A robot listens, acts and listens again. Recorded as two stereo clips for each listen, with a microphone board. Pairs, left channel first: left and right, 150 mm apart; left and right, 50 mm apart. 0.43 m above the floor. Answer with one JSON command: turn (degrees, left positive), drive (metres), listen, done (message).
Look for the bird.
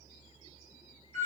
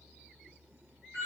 {"listen": true}
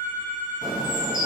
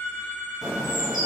{"turn": -30}
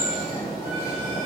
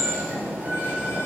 {"turn": -140}
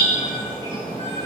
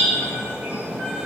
{"turn": -30}
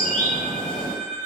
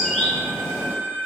{"turn": 10}
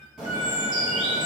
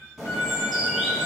{"done": "Facing the bird."}